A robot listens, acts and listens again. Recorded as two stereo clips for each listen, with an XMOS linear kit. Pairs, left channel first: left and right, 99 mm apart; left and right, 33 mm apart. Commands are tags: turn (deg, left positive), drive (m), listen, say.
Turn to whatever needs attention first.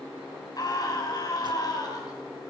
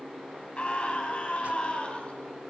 <turn deg="40"/>
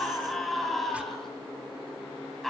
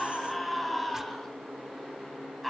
<say>Found it: a scream, straight ahead.</say>